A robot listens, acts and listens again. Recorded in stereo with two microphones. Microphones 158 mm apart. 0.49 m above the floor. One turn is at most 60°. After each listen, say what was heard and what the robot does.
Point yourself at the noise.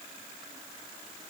Keep listening.
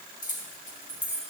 The keys jangling: about 60° left or 120° left. Turn 60° left.
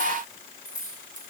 So it is at 60° left. Turn 60° left.
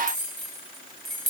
Facing the keys jangling.